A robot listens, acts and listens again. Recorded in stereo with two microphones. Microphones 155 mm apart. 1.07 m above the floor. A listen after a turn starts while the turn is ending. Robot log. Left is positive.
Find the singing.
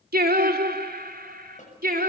note: The singing: about 60° right or 120° right.
cmd yaw -60
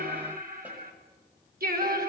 note: So it is at 70° right.
cmd yaw -70
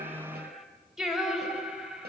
end: Found it: singing, straight ahead, over 4 m away.